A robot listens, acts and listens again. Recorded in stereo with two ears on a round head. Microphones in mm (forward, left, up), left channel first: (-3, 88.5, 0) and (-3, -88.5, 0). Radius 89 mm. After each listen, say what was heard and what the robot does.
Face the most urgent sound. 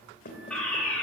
Turn 30° left.
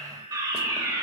So it is at 20° right. Turn 20° right.
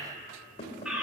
Found it: a fire alarm, straight ahead, 2 to 4 m away.